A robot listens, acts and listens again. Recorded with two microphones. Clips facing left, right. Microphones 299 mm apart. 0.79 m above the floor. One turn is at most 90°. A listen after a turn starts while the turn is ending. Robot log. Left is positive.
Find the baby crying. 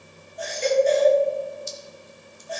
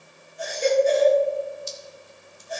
note: The baby crying: about 50° right or 130° right.
cmd yaw -50
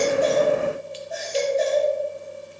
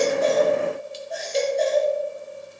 end: Facing the baby crying.